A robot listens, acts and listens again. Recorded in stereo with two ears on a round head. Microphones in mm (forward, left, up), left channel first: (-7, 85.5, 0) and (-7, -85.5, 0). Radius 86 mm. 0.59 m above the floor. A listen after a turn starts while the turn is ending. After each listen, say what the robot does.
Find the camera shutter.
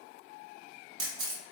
Turn 90° right.
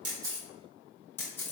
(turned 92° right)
Turn 15° left.
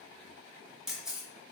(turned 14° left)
Facing the camera shutter.